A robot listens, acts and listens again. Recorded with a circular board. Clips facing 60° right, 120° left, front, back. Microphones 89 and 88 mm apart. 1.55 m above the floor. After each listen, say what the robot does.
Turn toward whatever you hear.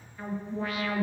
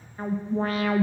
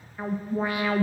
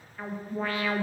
Turn 70° left.
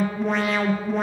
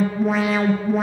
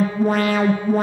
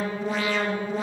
Turn 35° left.
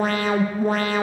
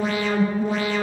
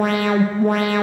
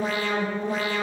Turn 20° right.
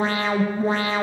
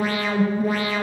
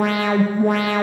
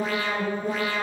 Facing the alarm.